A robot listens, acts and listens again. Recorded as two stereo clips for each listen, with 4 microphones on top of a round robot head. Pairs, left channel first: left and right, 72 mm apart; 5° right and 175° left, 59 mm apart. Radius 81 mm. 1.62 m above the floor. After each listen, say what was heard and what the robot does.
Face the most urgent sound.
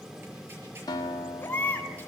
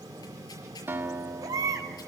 The baby crying: 155° left. Turn 155° left.
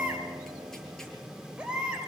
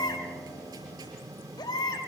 The baby crying is now 10° right. Turn 10° right.
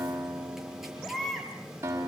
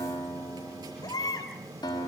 Facing the baby crying.